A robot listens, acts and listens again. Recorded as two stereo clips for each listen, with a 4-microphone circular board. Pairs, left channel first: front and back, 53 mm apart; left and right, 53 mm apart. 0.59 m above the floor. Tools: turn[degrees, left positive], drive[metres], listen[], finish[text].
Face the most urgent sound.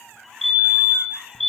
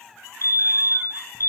Thought: The fire alarm: 90° left.
Action: turn[90]
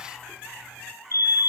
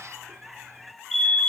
Action: finish[Found it: a fire alarm, straight ahead, over 4 m away.]